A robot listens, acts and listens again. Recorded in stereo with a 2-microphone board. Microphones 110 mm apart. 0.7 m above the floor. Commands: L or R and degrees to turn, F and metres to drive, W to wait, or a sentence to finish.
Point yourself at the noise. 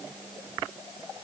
W
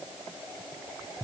W
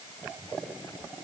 I can't make out anything.